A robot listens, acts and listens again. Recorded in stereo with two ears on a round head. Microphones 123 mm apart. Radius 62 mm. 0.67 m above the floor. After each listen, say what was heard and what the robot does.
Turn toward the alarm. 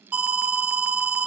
Turn 30° right.
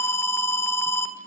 So it is at 20° left. Turn 20° left.
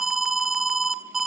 Facing the alarm, 1 to 2 m away.